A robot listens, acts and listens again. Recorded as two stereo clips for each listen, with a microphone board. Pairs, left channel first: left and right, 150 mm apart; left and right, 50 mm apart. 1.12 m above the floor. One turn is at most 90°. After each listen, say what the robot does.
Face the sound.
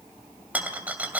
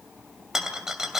Turn 30° right.
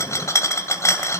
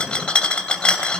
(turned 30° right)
Turn 20° left.
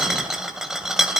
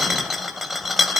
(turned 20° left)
Found it: a rattle, straight ahead, 2 to 4 m away.